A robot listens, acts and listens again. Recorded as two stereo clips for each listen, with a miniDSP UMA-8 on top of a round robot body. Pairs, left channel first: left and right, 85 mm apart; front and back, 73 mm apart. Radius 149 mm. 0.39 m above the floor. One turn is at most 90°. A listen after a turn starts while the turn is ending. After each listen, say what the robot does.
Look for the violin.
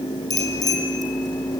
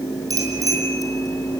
Keep listening.
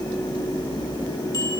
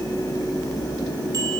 Keep listening.
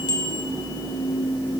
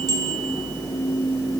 I can't make out a violin, only a bicycle bell.